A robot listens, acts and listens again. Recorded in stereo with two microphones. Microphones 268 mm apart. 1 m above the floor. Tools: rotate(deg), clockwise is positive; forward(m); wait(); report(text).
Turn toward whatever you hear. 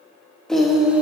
rotate(30)
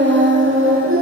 rotate(130)
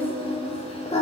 rotate(-25)
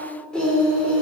report("Facing the singing.")